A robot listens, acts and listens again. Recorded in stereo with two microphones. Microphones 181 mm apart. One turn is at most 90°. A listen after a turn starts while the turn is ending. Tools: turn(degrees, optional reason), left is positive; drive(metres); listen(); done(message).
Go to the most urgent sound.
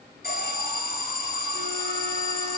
turn(degrees=55, reason="The alarm: about 55° left or 125° left.")
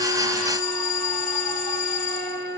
turn(degrees=55, reason="So it is at 55° left.")
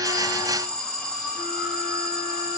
drive(metres=1.0)
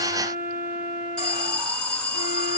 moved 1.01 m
drive(metres=1.0)
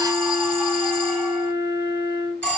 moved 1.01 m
turn(degrees=10, reason="The alarm is now 10° left.")
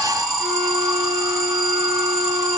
drive(metres=1.0)
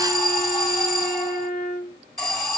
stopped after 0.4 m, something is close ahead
done("Arrived at the alarm, straight ahead.")